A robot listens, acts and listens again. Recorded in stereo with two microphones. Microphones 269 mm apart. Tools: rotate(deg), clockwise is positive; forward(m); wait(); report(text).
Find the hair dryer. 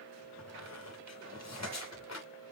wait()
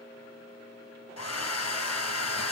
rotate(-70)
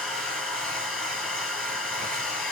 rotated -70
report("Facing the hair dryer, 1 to 2 m away.")